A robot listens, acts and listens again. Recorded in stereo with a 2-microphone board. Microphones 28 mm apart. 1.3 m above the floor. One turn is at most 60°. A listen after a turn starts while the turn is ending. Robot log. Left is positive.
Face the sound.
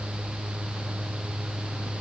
cmd idle
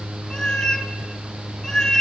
cmd yaw +30
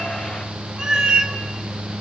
note: So it is at 35° right.
cmd yaw -35
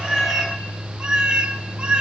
note: The cat meowing is now 45° right.
cmd yaw -45
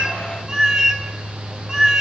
note: The cat meowing is now 25° right.
cmd yaw -25
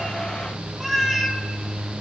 end: Facing the cat meowing.